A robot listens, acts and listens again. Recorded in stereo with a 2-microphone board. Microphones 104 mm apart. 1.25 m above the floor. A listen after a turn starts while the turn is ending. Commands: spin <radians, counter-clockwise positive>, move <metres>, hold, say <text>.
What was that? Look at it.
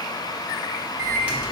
spin -0.52
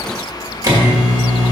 spin -2.53
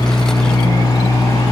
spin 0.44
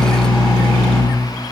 say Facing the microwave, 1 to 2 m away.